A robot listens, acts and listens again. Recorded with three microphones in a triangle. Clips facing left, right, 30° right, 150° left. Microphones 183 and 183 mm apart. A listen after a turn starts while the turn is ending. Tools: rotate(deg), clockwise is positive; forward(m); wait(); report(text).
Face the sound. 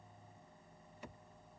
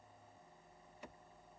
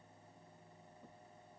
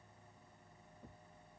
wait()
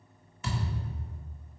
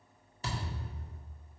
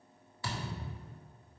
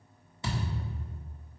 rotate(140)
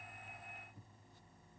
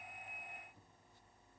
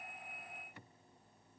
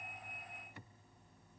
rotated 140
report("Facing where the thud came from. I can't hear it now.")